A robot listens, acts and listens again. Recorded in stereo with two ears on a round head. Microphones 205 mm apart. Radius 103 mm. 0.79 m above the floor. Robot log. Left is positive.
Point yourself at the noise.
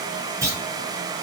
cmd yaw -30
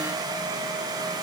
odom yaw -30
cmd idle
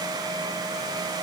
end: I heard a clunk, but can't make it out now. It was about 15° left or 135° right.